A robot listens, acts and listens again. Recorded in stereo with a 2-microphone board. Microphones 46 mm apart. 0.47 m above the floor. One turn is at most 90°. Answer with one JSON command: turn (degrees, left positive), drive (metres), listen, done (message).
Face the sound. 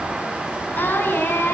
{"turn": 50}
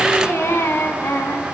{"turn": 65}
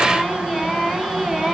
{"done": "Found it: singing, straight ahead."}